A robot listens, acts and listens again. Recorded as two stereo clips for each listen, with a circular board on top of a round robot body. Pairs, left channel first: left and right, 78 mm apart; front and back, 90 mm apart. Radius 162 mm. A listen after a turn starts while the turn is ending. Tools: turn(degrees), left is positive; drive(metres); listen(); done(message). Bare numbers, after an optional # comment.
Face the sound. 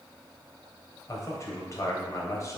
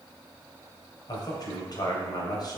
# The man speaking: 40° left.
turn(40)
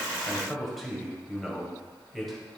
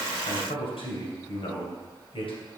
done("Found it: a man speaking, straight ahead.")